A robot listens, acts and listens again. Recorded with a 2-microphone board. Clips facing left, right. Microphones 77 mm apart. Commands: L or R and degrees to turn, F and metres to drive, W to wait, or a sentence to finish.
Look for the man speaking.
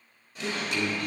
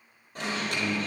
L55
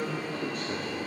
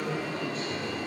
L65
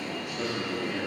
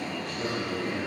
L20
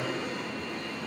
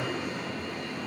R10
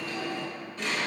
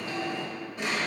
W
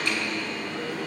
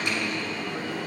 W
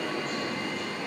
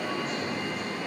Facing where the man speaking came from. I can't hear it now.